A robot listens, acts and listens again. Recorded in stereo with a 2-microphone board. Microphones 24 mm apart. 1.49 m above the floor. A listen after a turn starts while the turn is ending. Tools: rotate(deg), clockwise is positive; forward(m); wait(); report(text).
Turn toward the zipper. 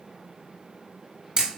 wait()
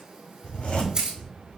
rotate(-70)
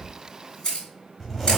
rotate(-15)
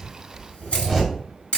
report("Facing the zipper.")